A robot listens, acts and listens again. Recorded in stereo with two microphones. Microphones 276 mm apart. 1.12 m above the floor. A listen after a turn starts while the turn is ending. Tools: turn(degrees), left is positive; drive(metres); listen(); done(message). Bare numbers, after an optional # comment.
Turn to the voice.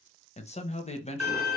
# The man speaking: about 25° left or 155° left.
turn(25)
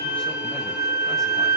listen()
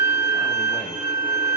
listen()
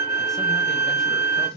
done("Facing the man speaking.")